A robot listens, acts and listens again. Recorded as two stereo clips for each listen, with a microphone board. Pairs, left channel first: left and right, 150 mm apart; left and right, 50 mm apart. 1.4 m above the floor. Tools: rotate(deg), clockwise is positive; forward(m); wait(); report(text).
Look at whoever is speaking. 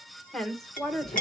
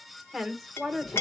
rotate(-30)
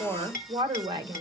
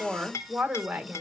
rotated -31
rotate(30)
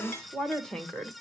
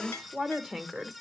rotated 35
report("Found it: a woman speaking, straight ahead.")